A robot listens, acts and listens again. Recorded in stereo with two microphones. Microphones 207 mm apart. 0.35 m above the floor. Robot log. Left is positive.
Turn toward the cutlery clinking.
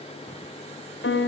cmd idle
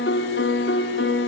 cmd idle
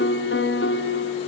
end: I can't make out cutlery clinking to turn to.